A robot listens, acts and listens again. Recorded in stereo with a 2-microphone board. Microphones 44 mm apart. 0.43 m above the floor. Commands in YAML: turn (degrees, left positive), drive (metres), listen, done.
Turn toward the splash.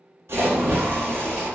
turn: -75
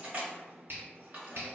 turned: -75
listen: true
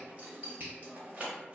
done: "I heard a splash, but can't make it out now. It was about straight ahead or 30° right."